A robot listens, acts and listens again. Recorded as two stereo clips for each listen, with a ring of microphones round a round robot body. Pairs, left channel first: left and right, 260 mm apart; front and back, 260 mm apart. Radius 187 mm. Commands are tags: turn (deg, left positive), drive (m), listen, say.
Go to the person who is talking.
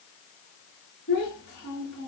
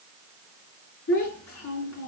<turn deg="25"/>
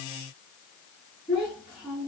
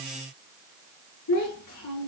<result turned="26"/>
<drive m="1.0"/>
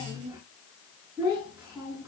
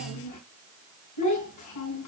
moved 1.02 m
<drive m="1.0"/>
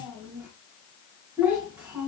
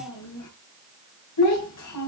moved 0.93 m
<drive m="1.0"/>
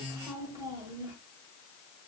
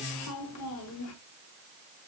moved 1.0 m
<turn deg="-10"/>
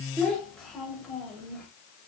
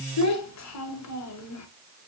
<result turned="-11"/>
<drive m="1.0"/>
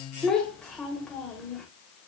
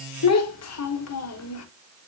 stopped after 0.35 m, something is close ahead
<say>I am next to the child speaking.</say>